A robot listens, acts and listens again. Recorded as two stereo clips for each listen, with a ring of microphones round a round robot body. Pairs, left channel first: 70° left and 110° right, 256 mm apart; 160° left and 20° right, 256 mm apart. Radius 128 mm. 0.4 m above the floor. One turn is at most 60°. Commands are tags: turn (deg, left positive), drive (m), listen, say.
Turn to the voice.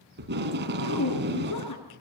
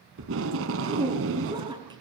<turn deg="50"/>
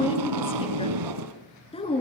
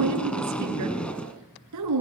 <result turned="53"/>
<say>Found it: a woman speaking, straight ahead, over 4 m away.</say>